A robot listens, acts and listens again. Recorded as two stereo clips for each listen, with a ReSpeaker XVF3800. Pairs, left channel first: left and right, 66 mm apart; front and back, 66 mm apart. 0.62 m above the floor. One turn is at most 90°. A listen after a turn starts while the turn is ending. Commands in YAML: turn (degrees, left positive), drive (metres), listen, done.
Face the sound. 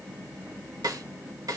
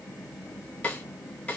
turn: -70
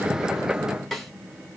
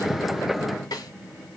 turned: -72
done: "Found it: a snare drum, straight ahead."